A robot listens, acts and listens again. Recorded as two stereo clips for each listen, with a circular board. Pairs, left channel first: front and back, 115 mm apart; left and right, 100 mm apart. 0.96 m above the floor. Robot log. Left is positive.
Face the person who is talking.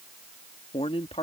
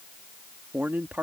note: The man speaking: 20° right.
cmd yaw -20
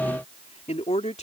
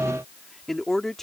end: Facing the man speaking.